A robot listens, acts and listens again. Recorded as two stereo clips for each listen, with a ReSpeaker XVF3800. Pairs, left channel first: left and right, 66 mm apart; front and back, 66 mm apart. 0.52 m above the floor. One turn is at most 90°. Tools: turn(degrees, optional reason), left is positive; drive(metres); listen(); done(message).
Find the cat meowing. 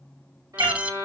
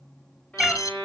turn(degrees=-90, reason="The cat meowing: 90° right.")
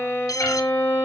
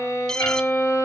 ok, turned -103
turn(degrees=15, reason="Nothing new. It was at 15° left.")
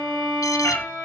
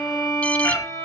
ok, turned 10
turn(degrees=45, reason="The cat meowing is now 45° left.")
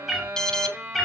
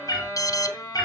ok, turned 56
done("Facing the cat meowing.")